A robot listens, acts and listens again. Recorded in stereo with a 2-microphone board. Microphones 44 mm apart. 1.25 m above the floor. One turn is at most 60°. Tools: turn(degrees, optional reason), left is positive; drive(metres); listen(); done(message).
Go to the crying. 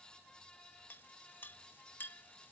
listen()
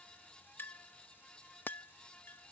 listen()
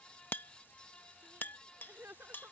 turn(degrees=-60, reason="The crying: about 65° right or 115° right.")
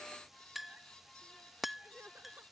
turn(degrees=-55, reason="So it is at 55° right.")
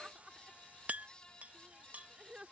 turn(degrees=-20, reason="The crying is now 20° right.")
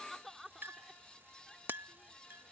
drive(metres=1.0)
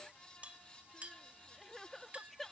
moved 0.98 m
drive(metres=1.0)
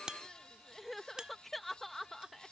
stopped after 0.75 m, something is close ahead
done("Arrived at the crying, straight ahead.")